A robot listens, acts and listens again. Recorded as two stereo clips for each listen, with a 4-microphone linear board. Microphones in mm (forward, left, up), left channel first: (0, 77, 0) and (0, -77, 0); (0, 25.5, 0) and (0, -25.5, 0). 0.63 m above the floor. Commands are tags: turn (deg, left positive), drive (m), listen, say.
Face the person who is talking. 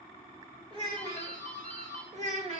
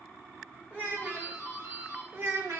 <turn deg="-50"/>
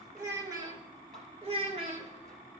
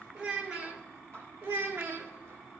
<turn deg="-45"/>
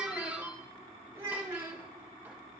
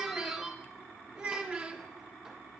<turn deg="-20"/>
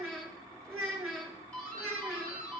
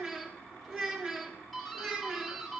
<say>Found it: a child speaking, straight ahead, 1 to 2 m away.</say>